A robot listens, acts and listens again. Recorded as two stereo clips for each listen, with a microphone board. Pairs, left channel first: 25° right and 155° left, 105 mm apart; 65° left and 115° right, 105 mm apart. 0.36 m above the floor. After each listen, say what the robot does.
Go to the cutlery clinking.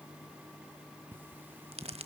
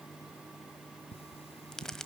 Turn 85° left.
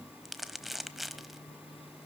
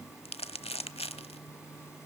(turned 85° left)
Keep listening.
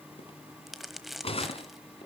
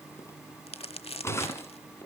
Drive 1.0 m forward.
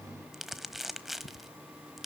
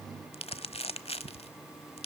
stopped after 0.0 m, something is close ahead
Something is in my way. I am facing the cutlery clinking but have not reached it.